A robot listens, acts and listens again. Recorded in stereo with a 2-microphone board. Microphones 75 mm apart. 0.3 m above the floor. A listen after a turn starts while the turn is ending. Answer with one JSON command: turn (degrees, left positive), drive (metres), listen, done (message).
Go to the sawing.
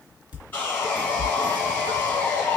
{"turn": 30}
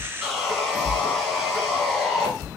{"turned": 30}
{"drive": 1.0}
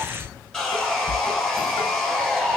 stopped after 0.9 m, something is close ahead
{"turn": 15}
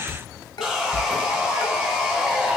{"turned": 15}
{"done": "Arrived at the sawing, straight ahead."}